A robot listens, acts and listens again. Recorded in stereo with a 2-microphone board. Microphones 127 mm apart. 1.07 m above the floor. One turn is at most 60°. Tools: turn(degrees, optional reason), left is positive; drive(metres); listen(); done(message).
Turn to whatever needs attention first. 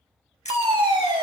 turn(degrees=-40, reason="The fire alarm: about 40° right or 140° right.")
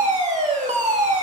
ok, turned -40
turn(degrees=-60, reason="So it is at 100° right.")
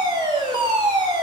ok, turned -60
turn(degrees=-40, reason="The fire alarm is now 40° right.")
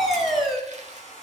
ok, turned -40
done("Found it: a fire alarm, straight ahead.")